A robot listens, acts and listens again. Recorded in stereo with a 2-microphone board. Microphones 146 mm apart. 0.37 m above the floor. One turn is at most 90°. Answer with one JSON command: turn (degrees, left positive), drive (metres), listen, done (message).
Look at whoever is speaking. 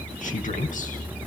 {"turn": 60}
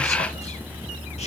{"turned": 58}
{"listen": true}
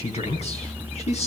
{"turn": 55}
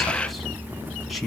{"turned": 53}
{"done": "Facing the man speaking, 2 to 4 m away."}